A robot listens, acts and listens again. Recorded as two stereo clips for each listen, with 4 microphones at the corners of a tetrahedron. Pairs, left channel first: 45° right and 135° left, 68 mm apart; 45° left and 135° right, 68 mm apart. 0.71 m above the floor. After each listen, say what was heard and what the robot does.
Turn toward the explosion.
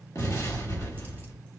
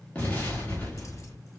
The explosion: 20° right. Turn 20° right.
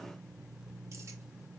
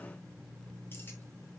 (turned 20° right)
I heard an explosion from this way, but can't make it out now.